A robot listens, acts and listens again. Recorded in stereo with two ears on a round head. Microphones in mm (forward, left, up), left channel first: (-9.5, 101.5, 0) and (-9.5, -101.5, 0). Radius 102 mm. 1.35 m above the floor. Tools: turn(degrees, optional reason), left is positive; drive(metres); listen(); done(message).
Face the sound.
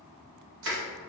turn(degrees=-60, reason="The crushing: about 60° right or 120° right.")
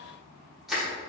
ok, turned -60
done("Facing the crushing, 1 to 2 m away.")